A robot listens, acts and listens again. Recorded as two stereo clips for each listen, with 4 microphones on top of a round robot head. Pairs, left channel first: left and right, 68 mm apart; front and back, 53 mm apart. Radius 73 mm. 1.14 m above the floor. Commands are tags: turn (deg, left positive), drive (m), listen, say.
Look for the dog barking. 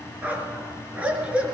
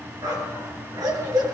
<turn deg="-165"/>
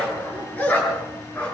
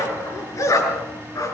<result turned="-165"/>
<turn deg="15"/>
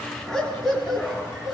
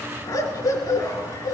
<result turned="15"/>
<say>Facing the dog barking, over 4 m away.</say>